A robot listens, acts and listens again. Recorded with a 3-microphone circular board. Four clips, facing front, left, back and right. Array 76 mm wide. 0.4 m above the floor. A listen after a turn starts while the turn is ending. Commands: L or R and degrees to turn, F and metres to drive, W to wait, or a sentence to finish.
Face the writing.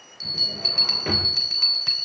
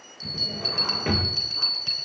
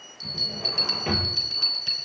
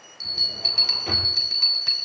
W
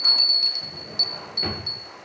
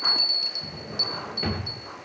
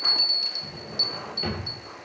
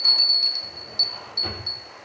W
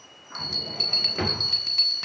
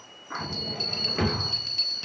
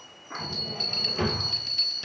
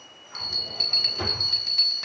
I can't make out writing, only a drawer and a bell.